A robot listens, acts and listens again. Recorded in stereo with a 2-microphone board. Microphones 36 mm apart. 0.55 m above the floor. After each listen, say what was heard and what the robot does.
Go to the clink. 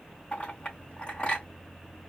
The clink: about 30° left or 150° left. Turn 30° left.
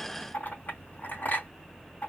So it is at 115° left. Turn 115° left.
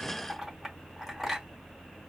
Drive 1.0 m forward.
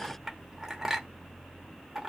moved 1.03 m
The clink is now 15° right. Turn 15° right.
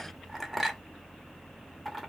Drive 1.0 m forward.
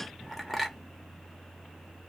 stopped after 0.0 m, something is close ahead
Arrived at the clink, straight ahead.